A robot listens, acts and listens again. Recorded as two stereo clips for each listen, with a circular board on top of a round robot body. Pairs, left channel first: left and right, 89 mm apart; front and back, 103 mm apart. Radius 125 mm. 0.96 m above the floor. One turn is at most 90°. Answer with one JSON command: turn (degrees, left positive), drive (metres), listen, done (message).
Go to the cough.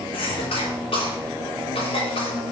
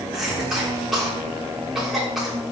{"turn": 90}
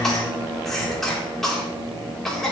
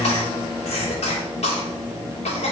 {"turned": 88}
{"drive": 1.0}
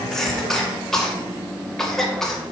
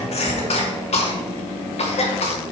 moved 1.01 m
{"drive": 1.0}
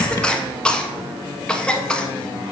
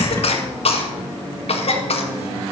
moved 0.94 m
{"turn": 10}
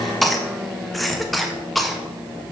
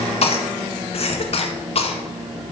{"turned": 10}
{"drive": 1.0}
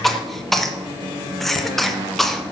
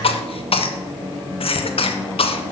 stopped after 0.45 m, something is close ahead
{"done": "Arrived at the cough, straight ahead."}